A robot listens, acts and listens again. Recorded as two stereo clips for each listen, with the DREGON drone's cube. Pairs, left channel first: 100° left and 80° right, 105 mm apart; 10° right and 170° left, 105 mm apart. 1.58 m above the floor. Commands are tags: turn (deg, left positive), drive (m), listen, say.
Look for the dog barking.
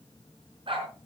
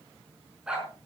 <turn deg="-110"/>
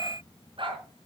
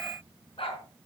<turn deg="-40"/>
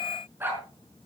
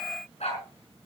<turn deg="-10"/>
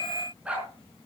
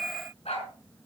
<say>Found it: a dog barking, straight ahead, over 4 m away.</say>